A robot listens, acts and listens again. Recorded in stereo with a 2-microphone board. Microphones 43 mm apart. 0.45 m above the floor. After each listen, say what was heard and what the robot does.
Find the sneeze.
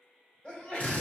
The sneeze: about 25° left or 155° left. Turn 25° left.
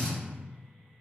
Keep listening.
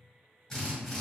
I heard a sneeze, but can't make it out now. It was about straight ahead or 130° left.